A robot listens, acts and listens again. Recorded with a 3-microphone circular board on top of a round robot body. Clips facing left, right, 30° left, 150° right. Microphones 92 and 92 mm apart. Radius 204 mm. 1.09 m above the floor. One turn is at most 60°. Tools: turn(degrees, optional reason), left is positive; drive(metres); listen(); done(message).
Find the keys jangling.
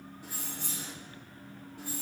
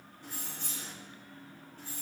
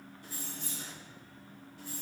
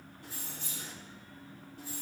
turn(degrees=60, reason="The keys jangling: 165° left.")
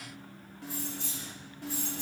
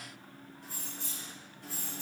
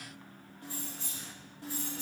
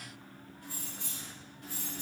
turn(degrees=60, reason="The keys jangling is now 85° left.")
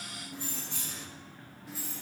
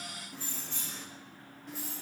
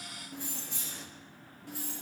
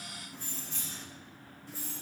done("Found it: keys jangling, straight ahead, 1 to 2 m away.")